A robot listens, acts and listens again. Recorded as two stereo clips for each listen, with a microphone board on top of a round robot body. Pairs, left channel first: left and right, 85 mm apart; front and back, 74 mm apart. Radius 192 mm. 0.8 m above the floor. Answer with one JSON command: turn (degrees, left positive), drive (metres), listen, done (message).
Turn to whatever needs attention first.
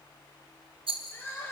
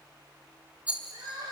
{"turn": 155}
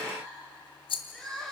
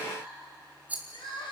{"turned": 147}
{"done": "Found it: crying, straight ahead."}